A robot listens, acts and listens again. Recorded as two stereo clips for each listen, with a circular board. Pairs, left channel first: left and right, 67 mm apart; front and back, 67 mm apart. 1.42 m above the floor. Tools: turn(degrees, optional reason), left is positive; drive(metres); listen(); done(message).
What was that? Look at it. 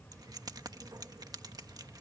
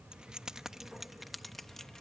turn(degrees=-85, reason="The keys jangling: 85° right.")
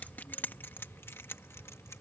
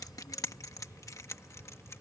turn(degrees=45, reason="The keys jangling is now 45° left.")
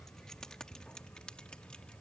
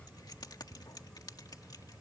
turn(degrees=15, reason="The keys jangling is now 15° left.")
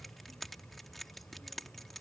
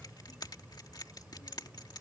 done("Found it: keys jangling, straight ahead.")